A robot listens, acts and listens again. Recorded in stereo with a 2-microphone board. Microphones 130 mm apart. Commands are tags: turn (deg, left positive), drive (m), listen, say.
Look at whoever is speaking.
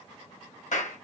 <listen/>
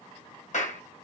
<listen/>
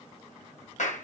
<say>I can't make out anyone speaking to turn to.</say>